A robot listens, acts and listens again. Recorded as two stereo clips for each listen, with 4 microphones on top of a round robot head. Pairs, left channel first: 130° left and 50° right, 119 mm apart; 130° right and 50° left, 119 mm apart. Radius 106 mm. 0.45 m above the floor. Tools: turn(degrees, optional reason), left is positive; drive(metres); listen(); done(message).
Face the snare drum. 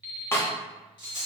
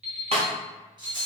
turn(degrees=60, reason="The snare drum: 60° left.")
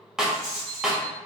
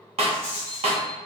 turn(degrees=35, reason="The snare drum is now 35° left.")
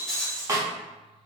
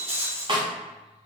turn(degrees=10, reason="The snare drum is now 10° left.")
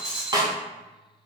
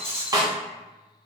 done("Found it: a snare drum, straight ahead.")